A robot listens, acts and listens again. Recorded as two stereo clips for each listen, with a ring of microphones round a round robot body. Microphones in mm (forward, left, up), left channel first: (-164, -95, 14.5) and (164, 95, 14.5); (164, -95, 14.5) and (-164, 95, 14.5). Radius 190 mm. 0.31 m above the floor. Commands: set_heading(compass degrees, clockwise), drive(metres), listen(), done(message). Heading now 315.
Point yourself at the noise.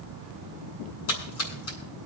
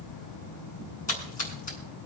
set_heading(55)
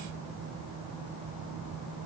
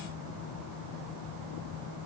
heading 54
done("I heard a splash from this way, but can't make it out now.")